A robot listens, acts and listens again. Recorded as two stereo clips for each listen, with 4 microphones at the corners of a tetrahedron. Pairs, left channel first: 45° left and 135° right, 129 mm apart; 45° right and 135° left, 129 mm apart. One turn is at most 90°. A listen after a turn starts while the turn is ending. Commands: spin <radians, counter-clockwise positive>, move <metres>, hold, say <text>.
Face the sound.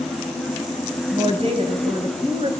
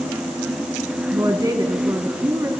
spin -1.57
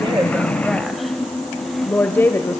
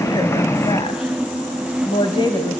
spin -0.26
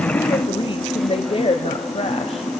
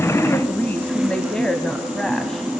spin 0.70
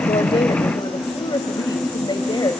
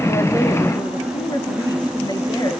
say Facing the woman speaking.